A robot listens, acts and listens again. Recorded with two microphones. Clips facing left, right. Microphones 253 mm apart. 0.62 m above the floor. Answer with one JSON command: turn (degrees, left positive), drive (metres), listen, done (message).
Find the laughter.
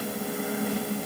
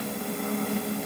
{"listen": true}
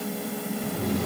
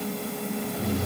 {"turn": 70}
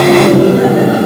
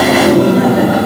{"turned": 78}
{"turn": 30}
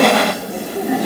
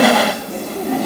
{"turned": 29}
{"turn": 15}
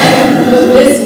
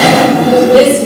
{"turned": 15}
{"turn": 20}
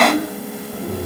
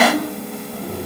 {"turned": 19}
{"turn": 15}
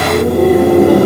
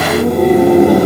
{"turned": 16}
{"done": "Found it: laughter, straight ahead."}